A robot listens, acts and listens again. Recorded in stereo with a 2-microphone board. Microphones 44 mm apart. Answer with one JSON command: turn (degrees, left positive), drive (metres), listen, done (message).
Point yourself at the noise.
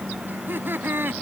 {"turn": -50}
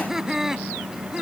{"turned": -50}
{"turn": -15}
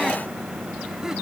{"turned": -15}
{"listen": true}
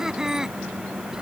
{"turn": -15}
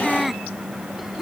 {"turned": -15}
{"done": "Facing the laughter."}